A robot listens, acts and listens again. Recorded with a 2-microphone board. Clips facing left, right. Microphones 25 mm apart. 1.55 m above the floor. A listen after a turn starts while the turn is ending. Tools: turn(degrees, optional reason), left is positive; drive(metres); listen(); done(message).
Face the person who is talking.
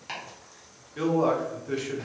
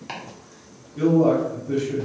turn(degrees=60, reason="The man speaking: about 60° left or 120° left.")
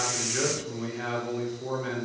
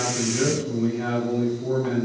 turn(degrees=60, reason="So it is at 60° left.")
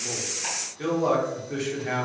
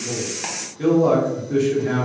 done("Found it: a man speaking, straight ahead.")